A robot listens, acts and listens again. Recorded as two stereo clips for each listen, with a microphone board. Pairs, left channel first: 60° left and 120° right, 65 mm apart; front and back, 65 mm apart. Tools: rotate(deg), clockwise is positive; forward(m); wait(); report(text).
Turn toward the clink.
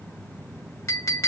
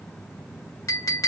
rotate(-25)
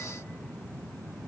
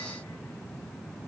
wait()
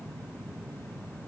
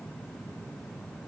wait()
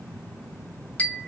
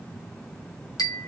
report("Facing the clink.")